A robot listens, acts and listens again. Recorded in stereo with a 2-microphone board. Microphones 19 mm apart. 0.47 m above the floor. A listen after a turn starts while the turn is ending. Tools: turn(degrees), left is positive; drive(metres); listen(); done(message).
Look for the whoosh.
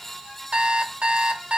listen()
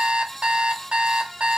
listen()
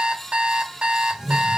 turn(degrees=-25)
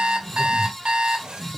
turn(degrees=-125)
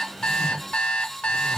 turn(degrees=30)
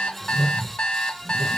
done("Facing the whoosh, 1 to 2 m away.")